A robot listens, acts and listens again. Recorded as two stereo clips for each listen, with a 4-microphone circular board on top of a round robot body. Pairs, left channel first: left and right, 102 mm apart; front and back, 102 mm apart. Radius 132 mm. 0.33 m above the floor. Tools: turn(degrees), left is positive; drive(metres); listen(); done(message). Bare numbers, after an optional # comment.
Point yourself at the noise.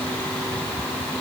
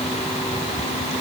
listen()
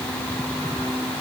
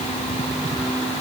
listen()
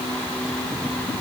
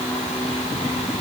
done("I can't make out anything to turn to.")